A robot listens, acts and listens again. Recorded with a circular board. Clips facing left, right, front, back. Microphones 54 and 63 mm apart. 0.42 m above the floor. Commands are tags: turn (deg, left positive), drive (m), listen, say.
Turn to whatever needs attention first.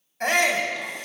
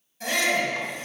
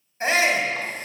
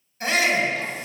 <turn deg="55"/>
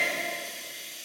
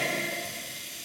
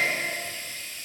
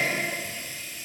<listen/>
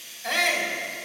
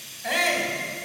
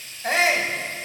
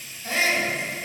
<say>Found it: a shout, straight ahead, 2 to 4 m away.</say>